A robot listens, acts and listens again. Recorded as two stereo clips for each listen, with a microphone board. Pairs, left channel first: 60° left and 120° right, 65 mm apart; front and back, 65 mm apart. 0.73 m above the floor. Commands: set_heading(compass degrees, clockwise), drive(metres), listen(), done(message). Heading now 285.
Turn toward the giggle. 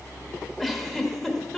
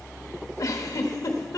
set_heading(315)
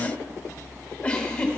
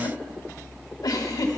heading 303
set_heading(313)
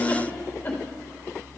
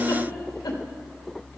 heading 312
listen()
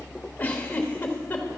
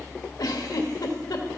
done("Found it: a giggle, straight ahead, 1 to 2 m away.")